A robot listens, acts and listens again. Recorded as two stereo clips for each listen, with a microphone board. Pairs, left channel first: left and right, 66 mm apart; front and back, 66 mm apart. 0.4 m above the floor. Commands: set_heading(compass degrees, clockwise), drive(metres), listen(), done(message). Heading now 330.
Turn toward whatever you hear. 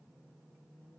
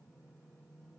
listen()
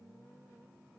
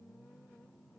listen()
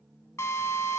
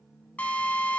set_heading(270)
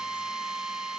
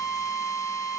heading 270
set_heading(280)
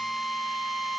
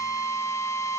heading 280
done("Found it: a drill, straight ahead.")